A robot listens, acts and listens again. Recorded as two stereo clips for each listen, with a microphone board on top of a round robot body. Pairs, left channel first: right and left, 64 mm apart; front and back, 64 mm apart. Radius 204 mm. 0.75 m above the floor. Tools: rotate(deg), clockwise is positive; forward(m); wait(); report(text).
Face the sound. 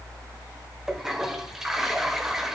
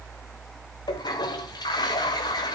report("Found it: a toilet flushing, straight ahead.")